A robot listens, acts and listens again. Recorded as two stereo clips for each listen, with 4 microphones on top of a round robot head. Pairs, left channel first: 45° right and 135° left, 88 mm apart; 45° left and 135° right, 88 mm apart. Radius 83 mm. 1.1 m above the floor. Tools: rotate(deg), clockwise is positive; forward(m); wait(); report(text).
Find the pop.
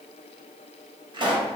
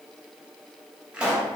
rotate(-150)
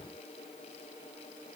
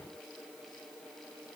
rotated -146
report("Facing where the pop came from. I can't hear it now.")